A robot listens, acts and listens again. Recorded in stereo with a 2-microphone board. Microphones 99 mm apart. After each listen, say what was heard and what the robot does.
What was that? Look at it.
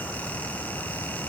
Keep listening.
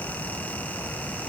Keep listening.
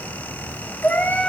The cat meowing: about 15° left or 165° left. Turn 15° left.
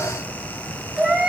Turn 30° right.
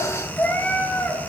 So it is at 15° left. Turn 15° left.
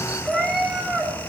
Facing the cat meowing.